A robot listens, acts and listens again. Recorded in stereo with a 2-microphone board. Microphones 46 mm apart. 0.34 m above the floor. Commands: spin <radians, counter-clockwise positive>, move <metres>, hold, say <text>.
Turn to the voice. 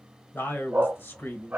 spin 0.96
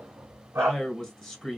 spin 0.26
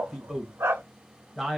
say Facing the man speaking.